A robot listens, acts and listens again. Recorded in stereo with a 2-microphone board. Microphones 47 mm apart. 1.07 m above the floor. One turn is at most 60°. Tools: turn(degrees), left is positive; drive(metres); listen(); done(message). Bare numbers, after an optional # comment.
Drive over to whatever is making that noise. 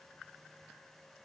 listen()
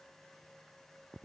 listen()
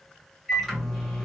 turn(30)
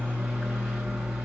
# So it is at 30° right.
turn(-30)
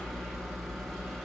drive(1.0)
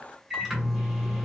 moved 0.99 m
# The microwave is now 10° right.
turn(-10)
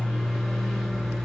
drive(1.0)
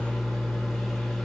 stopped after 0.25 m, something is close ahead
done("Arrived at the microwave, straight ahead.")